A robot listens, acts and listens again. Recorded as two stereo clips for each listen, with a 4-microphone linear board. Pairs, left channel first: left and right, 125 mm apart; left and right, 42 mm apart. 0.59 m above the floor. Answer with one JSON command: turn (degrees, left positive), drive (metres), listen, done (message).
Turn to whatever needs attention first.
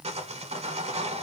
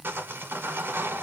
{"listen": true}
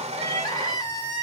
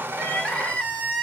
{"turn": 30}
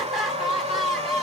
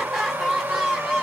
{"done": "Found it: crying, straight ahead, under 1 m away."}